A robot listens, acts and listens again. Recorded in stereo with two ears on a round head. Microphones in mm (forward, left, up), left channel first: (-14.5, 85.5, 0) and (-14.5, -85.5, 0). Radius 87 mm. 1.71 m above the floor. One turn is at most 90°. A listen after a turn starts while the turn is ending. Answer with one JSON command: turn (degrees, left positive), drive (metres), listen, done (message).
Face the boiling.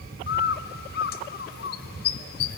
{"listen": true}
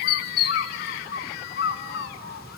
{"listen": true}
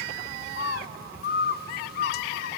{"done": "I can't make out boiling to turn to."}